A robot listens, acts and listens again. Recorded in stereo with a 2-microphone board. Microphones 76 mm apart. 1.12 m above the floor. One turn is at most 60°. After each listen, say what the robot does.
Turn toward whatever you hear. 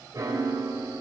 Turn 50° right.
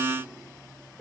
Found it: a piano, straight ahead, 2 to 4 m away.